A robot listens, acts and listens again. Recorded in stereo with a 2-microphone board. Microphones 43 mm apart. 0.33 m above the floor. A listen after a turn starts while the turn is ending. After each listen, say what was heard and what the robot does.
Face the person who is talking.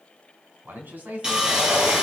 The man speaking: about 45° right or 135° right. Turn 45° right.
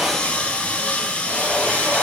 Keep listening.
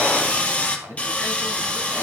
So it is at 85° right. Turn 85° right.
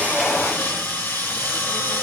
Keep listening.
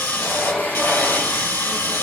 Keep listening.
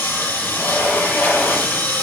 I heard a man speaking from this way, but can't make it out now.